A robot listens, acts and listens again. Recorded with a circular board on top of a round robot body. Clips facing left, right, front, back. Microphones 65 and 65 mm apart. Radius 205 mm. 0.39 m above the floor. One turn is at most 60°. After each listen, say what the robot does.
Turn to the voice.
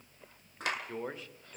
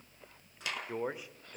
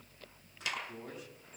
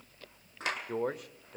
Turn 60° right.
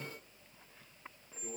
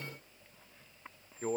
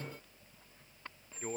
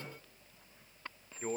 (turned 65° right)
Turn 60° right.
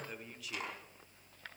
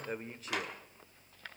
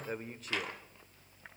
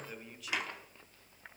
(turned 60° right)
Turn 45° right.
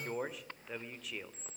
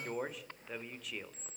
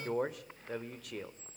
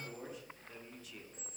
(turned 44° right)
Found it: a man speaking, straight ahead.